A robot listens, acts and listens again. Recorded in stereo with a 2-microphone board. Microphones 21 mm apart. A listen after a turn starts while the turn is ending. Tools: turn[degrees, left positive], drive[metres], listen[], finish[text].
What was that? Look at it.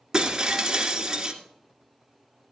Thought: The breaking glass: about 20° right or 160° right.
Action: turn[-20]
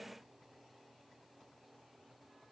Action: listen[]
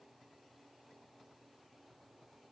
Action: finish[I heard breaking glass, but can't make it out now. It was about straight ahead or 140° right.]